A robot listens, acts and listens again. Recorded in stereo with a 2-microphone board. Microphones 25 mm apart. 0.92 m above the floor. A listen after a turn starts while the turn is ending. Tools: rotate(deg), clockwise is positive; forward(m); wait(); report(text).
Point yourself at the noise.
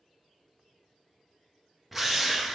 rotate(30)
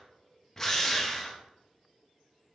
rotate(-15)
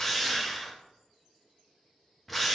report("Facing the drill.")